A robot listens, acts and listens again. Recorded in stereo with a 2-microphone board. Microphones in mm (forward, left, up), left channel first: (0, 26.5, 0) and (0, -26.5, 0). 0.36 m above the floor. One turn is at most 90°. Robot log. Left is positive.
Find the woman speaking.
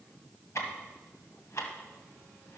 cmd idle
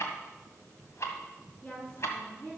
note: The woman speaking: about 40° left or 140° left.
cmd yaw +40
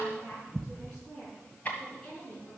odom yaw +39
note: So it is at 10° left.
cmd yaw +10
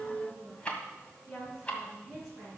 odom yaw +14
end: Facing the woman speaking, over 4 m away.